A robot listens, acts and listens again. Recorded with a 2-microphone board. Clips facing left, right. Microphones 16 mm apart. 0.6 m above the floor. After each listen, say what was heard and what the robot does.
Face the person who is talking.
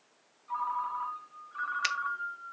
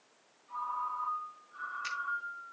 Keep listening.
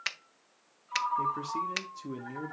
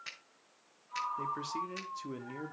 The man speaking: about 15° right or 165° right. Turn 15° right.
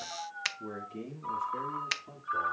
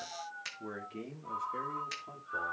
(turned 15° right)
The man speaking: about 25° right or 155° right. Turn 25° right.
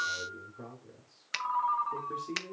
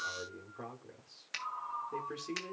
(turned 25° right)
So it is at 135° right. Turn 135° right.
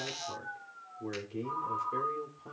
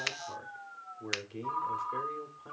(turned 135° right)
Found it: a man speaking, straight ahead.